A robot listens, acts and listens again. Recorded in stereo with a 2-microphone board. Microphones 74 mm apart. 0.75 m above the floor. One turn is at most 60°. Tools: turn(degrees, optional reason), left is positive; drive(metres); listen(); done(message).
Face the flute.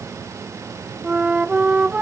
turn(degrees=-20, reason="The flute: about 20° right or 160° right.")
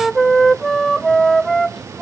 done("Facing the flute.")